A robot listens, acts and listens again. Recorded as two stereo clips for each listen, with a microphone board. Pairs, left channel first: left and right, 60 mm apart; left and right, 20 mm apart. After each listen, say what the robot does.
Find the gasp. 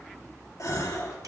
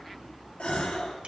Turn 65° left.
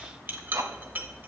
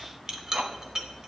Keep listening.
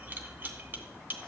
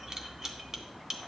I heard a gasp, but can't make it out now. It was about straight ahead or 50° left.